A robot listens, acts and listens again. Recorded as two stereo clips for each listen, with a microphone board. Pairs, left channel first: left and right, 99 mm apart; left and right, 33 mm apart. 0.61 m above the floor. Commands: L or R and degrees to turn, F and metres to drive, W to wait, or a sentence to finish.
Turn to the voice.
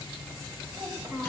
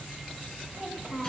R30
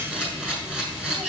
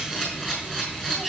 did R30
W
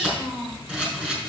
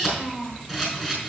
R115
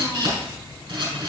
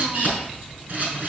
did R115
W
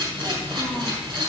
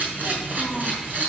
W
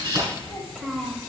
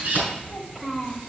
Facing the child speaking, 2 to 4 m away.